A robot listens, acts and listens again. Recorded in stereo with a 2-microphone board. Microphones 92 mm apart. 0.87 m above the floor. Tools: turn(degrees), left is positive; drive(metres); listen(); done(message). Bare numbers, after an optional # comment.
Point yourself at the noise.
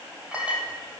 turn(-30)
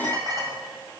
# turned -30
# So it is at 135° right.
turn(-135)
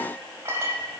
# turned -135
# The clink is now 30° right.
turn(-30)
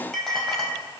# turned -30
done("Found it: a clink, straight ahead, over 4 m away.")